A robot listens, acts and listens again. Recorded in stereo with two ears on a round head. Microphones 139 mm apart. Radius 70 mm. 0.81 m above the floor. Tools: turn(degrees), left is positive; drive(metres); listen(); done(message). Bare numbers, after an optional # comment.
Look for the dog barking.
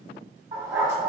# The dog barking: about 15° right or 165° right.
turn(-15)
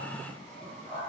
listen()
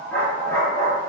# So it is at 25° left.
turn(25)
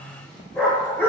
# The dog barking is now 15° left.
turn(15)
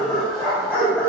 # The dog barking is now 10° left.
turn(10)
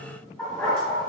done("Found it: a dog barking, straight ahead, 1 to 2 m away.")